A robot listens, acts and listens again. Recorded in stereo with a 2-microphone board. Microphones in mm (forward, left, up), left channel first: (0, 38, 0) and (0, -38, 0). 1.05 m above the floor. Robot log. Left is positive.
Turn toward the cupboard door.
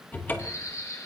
note: The cupboard door: about 25° left or 155° left.
cmd yaw +25
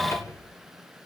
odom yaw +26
note: So it is at 125° left.
cmd yaw +125
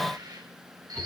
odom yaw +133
cmd idle
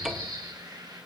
end: Found it: a cupboard door, straight ahead.